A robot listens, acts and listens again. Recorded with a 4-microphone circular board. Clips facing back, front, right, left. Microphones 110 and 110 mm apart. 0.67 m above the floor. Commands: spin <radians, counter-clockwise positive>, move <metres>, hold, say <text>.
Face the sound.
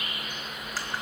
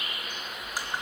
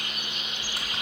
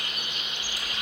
spin -1.31
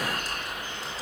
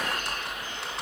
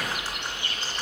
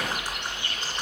spin 0.26
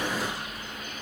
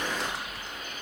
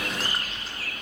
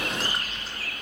say Facing the typing on a keyboard, 1 to 2 m away.